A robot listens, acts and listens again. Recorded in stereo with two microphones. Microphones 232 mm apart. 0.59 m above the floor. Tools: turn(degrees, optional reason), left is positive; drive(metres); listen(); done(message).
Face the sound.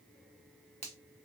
turn(degrees=30, reason="The finger snap: about 30° left or 150° left.")
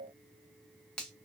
done("Facing the finger snap.")